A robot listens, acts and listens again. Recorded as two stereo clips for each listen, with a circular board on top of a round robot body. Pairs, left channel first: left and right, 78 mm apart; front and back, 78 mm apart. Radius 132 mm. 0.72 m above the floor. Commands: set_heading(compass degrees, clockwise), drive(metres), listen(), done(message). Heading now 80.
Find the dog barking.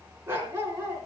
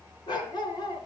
set_heading(110)
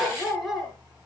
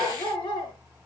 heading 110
done("Facing the dog barking, over 4 m away.")